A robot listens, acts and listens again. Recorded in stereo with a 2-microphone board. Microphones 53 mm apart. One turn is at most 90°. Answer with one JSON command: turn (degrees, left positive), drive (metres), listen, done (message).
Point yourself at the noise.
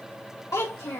{"turn": 90}
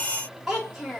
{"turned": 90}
{"turn": -10}
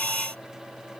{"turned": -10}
{"listen": true}
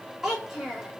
{"done": "Facing the child speaking, 2 to 4 m away."}